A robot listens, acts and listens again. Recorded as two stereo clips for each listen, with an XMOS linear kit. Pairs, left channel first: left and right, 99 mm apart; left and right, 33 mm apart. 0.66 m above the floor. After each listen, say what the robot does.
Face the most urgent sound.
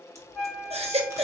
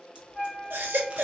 Turn 90° right.
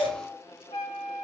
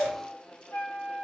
Turn 15° left.
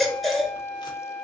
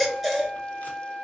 Facing the baby crying, 1 to 2 m away.